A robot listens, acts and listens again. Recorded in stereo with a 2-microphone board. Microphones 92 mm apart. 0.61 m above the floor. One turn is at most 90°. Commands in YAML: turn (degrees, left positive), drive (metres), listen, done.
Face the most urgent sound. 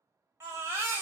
turn: -25
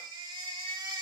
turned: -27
turn: -90
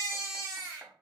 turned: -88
turn: -40
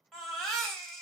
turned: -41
done: "Facing the baby crying."